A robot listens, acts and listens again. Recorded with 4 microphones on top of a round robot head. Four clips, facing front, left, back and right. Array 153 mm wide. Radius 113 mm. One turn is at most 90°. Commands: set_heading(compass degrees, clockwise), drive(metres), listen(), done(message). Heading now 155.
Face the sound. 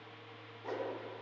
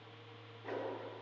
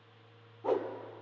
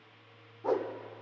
set_heading(245)
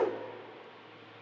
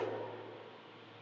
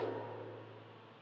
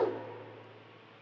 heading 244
set_heading(284)
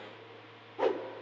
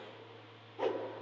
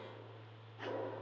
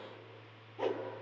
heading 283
done("Found it: a whoosh, straight ahead, 1 to 2 m away.")